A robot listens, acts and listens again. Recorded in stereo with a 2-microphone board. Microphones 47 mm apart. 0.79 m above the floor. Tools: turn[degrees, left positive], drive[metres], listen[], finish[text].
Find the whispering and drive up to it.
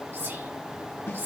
Thought: The whispering: about 65° right or 115° right.
Action: turn[-65]
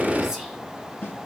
Action: listen[]
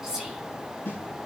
Thought: So it is at 15° right.
Action: turn[-15]
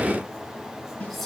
Action: drive[1.0]
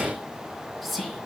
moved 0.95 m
Action: drive[1.0]
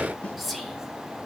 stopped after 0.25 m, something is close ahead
Action: finish[Arrived at the whispering, straight ahead.]